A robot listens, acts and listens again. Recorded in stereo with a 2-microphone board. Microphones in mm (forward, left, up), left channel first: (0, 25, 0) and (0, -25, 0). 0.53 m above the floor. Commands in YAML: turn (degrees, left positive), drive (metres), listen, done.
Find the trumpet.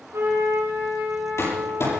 turn: -90
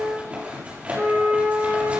turn: -15
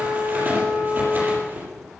done: "Found it: a trumpet, straight ahead."